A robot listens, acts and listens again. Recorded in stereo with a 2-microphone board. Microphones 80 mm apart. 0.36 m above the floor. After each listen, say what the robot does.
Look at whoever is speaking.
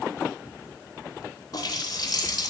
Keep listening.
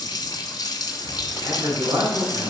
Turn 65° right.
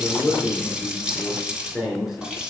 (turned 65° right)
Facing the man speaking, 2 to 4 m away.